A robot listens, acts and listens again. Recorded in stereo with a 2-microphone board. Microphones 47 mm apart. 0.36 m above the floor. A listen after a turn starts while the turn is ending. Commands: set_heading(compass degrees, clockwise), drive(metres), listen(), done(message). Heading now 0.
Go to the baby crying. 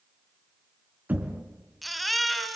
set_heading(330)
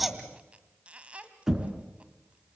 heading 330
listen()
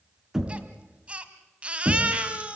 set_heading(355)
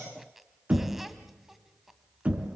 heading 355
listen()
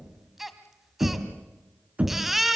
drive(1.0)
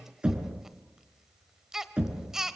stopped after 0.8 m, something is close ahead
set_heading(5)
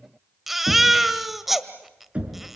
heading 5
done("I am next to the baby crying.")